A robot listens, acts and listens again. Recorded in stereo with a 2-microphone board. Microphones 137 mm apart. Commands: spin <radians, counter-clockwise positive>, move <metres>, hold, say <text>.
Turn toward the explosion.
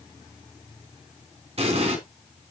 spin -0.87
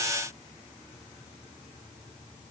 hold
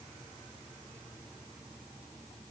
say I heard an explosion, but can't make it out now. It was about straight ahead or 80° right.